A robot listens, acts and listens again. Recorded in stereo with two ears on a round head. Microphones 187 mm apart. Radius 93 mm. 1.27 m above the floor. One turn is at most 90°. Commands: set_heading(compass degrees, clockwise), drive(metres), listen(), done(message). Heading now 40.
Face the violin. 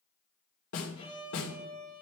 set_heading(10)
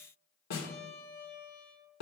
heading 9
set_heading(279)
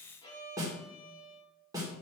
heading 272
set_heading(252)
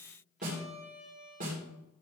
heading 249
done("Facing the violin.")